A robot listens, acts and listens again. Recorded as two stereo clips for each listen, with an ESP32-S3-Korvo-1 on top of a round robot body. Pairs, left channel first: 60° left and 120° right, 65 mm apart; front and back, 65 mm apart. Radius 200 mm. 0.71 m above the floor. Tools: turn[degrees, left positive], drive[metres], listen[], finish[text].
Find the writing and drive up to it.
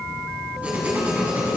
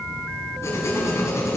Thought: The writing: 50° right.
Action: turn[-50]
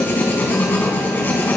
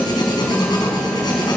Action: drive[1.0]
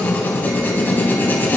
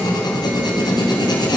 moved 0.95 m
Action: drive[1.0]
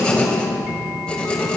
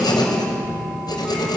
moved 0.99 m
Thought: The writing is now 15° right.
Action: turn[-15]
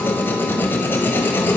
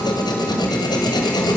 Action: drive[1.0]
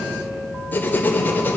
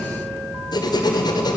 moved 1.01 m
Action: drive[1.0]
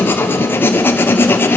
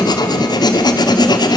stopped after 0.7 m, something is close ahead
Action: finish[Arrived at the writing, straight ahead.]